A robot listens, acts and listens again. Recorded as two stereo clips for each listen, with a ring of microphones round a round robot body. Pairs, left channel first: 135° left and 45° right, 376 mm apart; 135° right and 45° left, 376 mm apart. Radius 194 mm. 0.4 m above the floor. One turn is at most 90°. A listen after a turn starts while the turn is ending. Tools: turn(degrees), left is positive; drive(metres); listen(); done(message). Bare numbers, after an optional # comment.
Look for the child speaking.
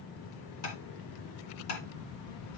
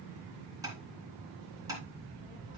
# The child speaking: 155° left.
turn(90)
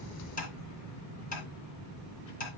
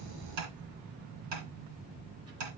# The child speaking is now 95° left.
turn(90)
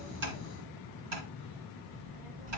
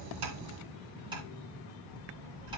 done("Found it: a child speaking, straight ahead, 2 to 4 m away.")